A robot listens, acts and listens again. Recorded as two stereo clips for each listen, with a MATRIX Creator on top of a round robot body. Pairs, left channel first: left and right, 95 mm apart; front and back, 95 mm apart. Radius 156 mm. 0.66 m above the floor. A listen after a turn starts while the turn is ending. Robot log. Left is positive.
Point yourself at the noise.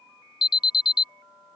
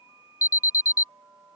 note: The alarm: 55° left.
cmd yaw +55
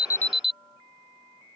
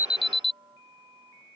end: Facing the alarm.